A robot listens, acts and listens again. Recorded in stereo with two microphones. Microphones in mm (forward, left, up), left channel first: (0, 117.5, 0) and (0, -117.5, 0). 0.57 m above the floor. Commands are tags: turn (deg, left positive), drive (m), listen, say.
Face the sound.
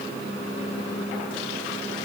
<listen/>
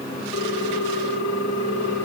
<turn deg="90"/>
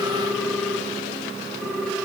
<say>Found it: a ringtone, straight ahead, 2 to 4 m away.</say>